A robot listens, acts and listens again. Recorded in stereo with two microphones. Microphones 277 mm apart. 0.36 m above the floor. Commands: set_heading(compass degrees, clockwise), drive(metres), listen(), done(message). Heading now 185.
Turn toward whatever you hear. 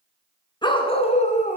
set_heading(155)
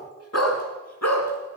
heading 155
set_heading(45)
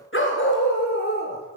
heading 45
set_heading(5)
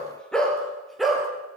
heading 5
done("Found it: a dog barking, straight ahead, 2 to 4 m away.")